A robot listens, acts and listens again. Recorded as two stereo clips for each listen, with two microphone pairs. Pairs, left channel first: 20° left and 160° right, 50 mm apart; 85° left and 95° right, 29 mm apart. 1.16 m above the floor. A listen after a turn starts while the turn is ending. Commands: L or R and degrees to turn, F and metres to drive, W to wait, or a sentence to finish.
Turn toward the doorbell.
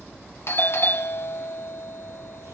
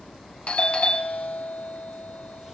L45
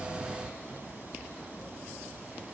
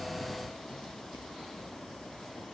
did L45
W
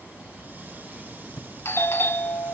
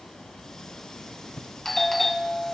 Found it: a doorbell, straight ahead.